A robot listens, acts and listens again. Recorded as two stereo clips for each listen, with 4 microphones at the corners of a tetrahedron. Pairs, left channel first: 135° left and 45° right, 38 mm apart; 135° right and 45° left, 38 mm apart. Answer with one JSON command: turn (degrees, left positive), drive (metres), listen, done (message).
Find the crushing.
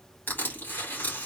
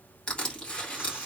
{"turn": 165}
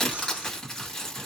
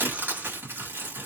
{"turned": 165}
{"turn": 55}
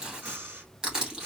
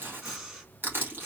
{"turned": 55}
{"turn": 20}
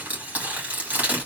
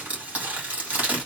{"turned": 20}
{"done": "Facing the crushing, 2 to 4 m away."}